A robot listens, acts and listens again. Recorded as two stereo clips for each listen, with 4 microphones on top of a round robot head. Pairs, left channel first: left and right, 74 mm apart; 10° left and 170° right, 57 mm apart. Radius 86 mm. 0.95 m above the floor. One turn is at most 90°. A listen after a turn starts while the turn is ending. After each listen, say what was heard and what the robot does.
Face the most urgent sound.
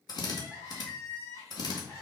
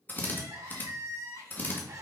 The crying: 150° left. Turn 90° left.
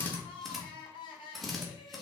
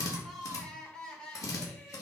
The crying is now 85° left. Turn 85° left.
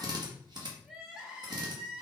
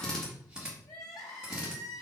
The crying is now 10° right. Turn 10° right.
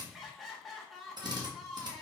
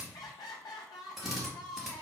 Found it: crying, straight ahead.